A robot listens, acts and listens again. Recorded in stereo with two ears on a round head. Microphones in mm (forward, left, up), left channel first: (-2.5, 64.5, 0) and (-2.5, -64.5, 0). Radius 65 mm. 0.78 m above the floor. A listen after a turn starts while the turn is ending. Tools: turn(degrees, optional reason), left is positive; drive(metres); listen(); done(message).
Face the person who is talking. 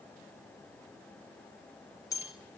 listen()
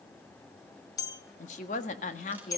turn(degrees=50, reason="The woman speaking: about 50° left or 130° left.")
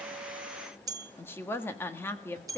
turn(degrees=20, reason="So it is at 20° left.")
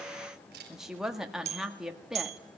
done("Facing the woman speaking, 1 to 2 m away.")